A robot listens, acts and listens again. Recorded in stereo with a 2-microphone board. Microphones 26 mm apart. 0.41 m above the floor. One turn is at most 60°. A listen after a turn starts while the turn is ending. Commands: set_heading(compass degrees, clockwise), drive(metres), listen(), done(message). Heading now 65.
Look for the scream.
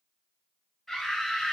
set_heading(35)
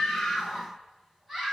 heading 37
set_heading(52)
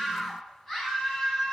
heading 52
done("Facing the scream, 2 to 4 m away.")